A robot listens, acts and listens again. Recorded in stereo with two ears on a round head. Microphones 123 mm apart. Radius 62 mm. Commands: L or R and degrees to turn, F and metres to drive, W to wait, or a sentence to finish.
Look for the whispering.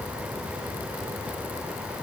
W
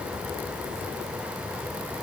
W
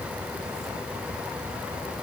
I can't make out whispering to turn to.